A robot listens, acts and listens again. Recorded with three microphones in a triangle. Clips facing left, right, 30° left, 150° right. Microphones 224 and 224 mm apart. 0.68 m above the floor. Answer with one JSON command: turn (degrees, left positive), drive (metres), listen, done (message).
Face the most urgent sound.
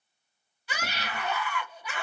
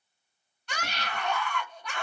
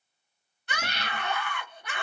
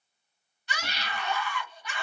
{"done": "Found it: a scream, straight ahead, under 1 m away."}